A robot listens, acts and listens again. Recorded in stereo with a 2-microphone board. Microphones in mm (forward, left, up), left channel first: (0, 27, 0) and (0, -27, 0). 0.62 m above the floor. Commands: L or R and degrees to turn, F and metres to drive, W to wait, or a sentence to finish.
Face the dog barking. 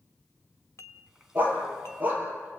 R35
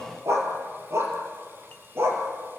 R125
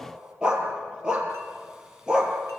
R15
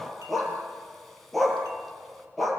Found it: a dog barking, straight ahead, over 4 m away.